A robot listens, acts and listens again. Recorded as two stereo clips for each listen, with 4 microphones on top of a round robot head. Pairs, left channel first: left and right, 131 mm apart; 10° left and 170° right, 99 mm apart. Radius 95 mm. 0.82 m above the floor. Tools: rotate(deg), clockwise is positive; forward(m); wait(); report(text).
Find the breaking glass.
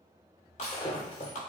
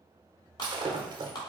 rotate(-155)
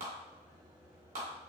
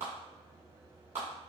report("I heard breaking glass from this way, but can't make it out now.")